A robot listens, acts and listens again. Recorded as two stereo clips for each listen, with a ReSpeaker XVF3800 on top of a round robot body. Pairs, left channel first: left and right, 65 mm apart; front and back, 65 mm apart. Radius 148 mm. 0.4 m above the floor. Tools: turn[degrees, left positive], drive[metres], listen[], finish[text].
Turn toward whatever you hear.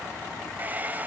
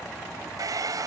Thought: The hair dryer: 155° right.
Action: turn[-155]
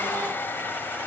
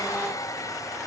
Thought: The hair dryer is now 30° left.
Action: turn[30]
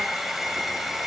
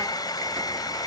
Action: finish[Facing the hair dryer.]